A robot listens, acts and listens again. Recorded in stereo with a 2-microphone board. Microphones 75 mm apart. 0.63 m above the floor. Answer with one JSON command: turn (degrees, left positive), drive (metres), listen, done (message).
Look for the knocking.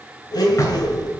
{"turn": 45}
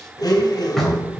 {"done": "Found it: knocking, straight ahead."}